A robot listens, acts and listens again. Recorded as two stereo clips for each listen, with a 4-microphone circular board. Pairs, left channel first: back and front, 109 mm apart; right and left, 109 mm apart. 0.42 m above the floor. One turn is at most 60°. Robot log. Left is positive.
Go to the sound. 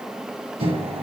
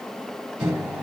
note: The microwave: 15° left.
cmd yaw +15
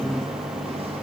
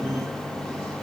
cmd fwd 1.0
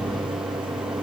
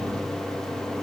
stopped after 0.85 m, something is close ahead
end: I am next to the microwave.